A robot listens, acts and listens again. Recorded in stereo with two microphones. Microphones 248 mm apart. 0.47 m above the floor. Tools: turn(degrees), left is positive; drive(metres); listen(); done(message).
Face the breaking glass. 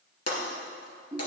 turn(degrees=90)
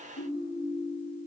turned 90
done("I heard breaking glass from this way, but can't make it out now.")